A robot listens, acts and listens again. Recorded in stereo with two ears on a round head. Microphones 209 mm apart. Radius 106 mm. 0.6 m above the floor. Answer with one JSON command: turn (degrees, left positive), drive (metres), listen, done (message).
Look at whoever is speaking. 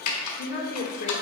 {"turn": 35}
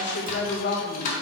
{"turn": 40}
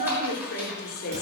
{"turn": 135}
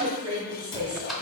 {"turn": -20}
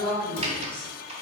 {"done": "Found it: a woman speaking, straight ahead, 1 to 2 m away."}